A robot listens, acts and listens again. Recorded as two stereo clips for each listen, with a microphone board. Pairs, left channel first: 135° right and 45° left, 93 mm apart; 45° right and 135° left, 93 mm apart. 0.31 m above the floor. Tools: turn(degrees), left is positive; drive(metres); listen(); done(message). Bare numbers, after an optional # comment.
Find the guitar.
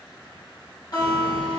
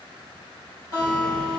# The guitar: 95° right.
turn(-95)
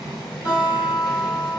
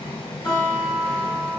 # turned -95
done("Facing the guitar.")